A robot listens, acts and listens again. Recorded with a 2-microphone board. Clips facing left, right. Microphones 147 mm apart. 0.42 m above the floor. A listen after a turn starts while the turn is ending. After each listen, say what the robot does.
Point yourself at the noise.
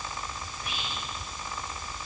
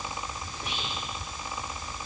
Turn 90° right.
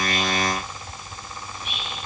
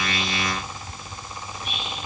Facing the whispering.